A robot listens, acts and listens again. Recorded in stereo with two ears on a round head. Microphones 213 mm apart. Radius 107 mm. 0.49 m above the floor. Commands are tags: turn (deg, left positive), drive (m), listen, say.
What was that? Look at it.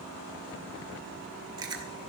<turn deg="-20"/>
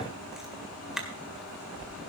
<say>Found it: chewing, straight ahead.</say>